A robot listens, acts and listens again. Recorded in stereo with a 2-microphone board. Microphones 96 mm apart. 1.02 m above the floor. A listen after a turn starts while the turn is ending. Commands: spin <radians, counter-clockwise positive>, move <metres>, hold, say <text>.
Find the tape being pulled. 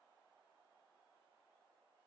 hold
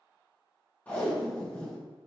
spin 0.26
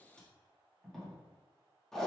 say Facing the tape being pulled, 1 to 2 m away.